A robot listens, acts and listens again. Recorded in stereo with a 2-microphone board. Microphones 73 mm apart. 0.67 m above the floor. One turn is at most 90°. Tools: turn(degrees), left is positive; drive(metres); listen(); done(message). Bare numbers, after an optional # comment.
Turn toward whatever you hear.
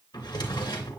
# The drawer: about 70° left or 110° left.
turn(70)
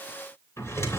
# So it is at 40° left.
turn(40)
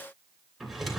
done("Facing the drawer.")